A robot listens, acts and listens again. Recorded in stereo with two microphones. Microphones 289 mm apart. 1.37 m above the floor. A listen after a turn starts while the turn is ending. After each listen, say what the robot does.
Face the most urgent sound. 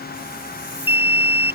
Turn 30° right.
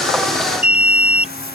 Turn 25° left.
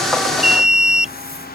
Facing the alarm.